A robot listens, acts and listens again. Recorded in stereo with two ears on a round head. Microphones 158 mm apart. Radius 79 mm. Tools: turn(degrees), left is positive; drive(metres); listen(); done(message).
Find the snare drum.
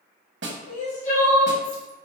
turn(degrees=-70)
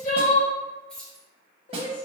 turn(degrees=-35)
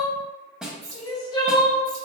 done("Facing the snare drum, under 1 m away.")